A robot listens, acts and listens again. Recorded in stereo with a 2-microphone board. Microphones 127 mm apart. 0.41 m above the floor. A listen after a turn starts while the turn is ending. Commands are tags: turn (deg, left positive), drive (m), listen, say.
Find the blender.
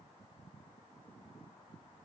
<listen/>
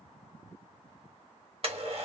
<turn deg="-50"/>
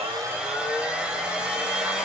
<turn deg="-10"/>
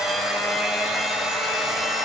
<say>Found it: a blender, straight ahead, 1 to 2 m away.</say>